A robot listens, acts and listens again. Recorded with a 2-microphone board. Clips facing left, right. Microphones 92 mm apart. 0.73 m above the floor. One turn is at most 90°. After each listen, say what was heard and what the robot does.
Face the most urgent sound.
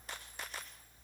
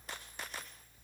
Keep listening.
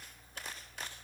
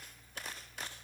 Keep listening.
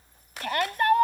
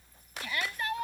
The shout: about 60° left or 120° left. Turn 60° left.
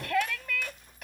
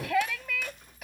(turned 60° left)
Facing the shout.